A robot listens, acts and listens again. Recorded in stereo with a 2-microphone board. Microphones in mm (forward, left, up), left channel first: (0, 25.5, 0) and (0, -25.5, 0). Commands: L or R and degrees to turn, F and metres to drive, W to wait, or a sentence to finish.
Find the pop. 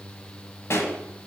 L60
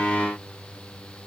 W
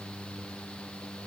I heard a pop, but can't make it out now. It was about straight ahead or 60° left.